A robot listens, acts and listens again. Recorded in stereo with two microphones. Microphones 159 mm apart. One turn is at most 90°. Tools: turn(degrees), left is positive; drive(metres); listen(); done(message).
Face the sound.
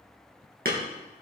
turn(degrees=-65)
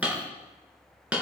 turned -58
turn(degrees=-10)
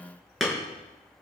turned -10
done("Facing the hammering, 2 to 4 m away.")